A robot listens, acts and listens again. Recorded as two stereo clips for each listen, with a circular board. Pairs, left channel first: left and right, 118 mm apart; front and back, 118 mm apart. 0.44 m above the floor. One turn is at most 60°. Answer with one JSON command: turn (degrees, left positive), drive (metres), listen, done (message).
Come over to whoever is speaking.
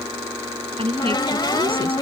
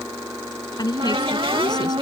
{"turn": -50}
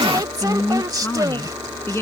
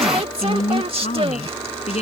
{"turn": 20}
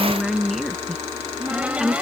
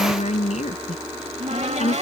{"drive": 1.0}
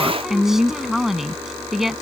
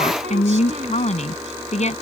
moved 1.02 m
{"drive": 1.0}
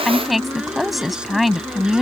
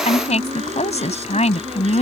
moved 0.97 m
{"drive": 1.0}
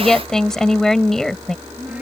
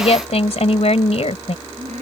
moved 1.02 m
{"drive": 1.0}
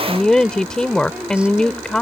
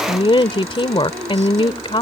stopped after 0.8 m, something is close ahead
{"turn": 10}
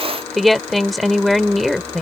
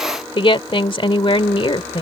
{"done": "I am next to the woman speaking."}